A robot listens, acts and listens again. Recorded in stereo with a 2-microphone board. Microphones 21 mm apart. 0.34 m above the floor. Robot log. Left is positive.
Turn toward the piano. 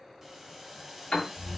note: The piano: about 50° left or 130° left.
cmd yaw +50
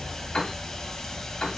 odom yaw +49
note: So it is at 70° left.
cmd yaw +70
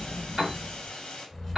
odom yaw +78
end: Found it: a piano, straight ahead, 1 to 2 m away.